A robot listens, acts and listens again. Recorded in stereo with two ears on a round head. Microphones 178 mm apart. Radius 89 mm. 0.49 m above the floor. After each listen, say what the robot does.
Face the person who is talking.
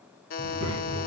Turn 90° right.
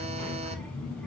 Facing the child speaking, 2 to 4 m away.